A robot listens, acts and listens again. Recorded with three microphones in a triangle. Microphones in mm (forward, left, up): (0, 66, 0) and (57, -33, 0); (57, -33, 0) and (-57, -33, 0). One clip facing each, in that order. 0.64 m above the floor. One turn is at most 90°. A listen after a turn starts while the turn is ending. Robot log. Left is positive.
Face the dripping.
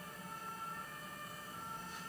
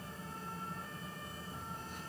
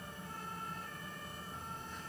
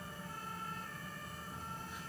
cmd idle
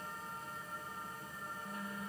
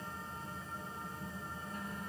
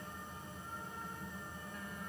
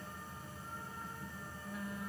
cmd idle
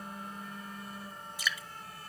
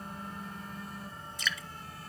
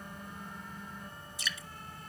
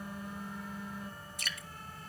note: The dripping: 160° right.
cmd yaw -90
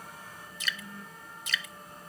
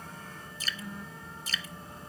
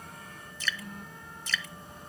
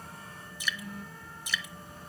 note: The dripping is now 105° right.
cmd yaw -90
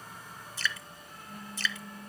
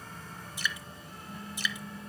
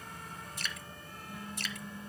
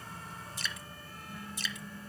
note: The dripping is now 15° left.
cmd yaw +15
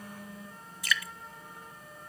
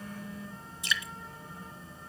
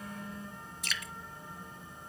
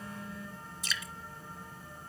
end: Facing the dripping, under 1 m away.